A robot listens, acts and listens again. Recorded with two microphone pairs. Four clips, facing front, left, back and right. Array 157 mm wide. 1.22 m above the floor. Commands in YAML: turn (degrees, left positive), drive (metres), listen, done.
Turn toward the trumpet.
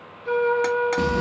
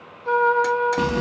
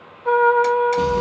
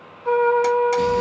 turn: -165
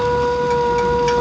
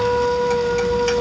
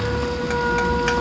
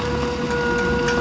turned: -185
turn: 25
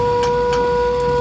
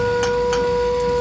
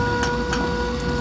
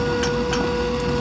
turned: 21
done: "Facing the trumpet."